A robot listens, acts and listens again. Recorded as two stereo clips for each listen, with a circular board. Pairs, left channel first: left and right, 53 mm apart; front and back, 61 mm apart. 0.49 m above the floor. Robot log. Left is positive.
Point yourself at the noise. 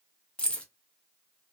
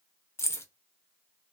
note: The keys jangling: 25° left.
cmd yaw +25
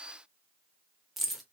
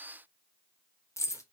end: Facing the keys jangling, under 1 m away.